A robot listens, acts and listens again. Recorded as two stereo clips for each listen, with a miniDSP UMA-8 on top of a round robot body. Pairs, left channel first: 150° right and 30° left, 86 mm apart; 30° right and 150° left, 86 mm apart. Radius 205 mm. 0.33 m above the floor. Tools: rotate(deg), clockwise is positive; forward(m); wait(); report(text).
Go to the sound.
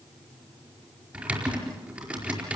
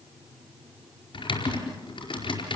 rotate(45)
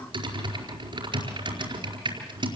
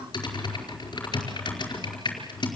forward(1.0)
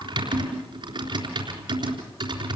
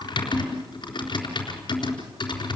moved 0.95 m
forward(1.0)
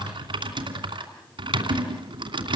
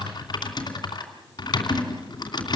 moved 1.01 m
forward(1.0)
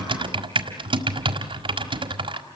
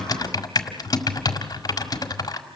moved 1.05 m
rotate(-15)
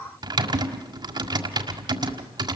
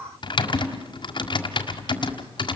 forward(1.0)
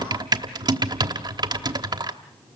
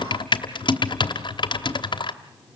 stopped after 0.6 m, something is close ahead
report("Arrived at the typing on a keyboard, straight ahead.")